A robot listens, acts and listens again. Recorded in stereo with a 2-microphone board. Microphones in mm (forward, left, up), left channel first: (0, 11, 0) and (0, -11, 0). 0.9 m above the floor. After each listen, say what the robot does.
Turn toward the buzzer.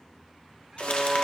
Turn 65° right.
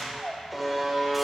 Facing the buzzer.